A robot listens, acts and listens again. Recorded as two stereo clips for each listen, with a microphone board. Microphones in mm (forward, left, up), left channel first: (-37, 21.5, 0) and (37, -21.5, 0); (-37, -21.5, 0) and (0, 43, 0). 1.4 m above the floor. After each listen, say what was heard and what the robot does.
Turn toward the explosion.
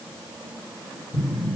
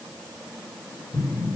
The explosion: 80° right. Turn 80° right.
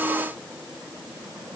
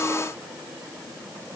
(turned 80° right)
Facing where the explosion came from. I can't hear it now.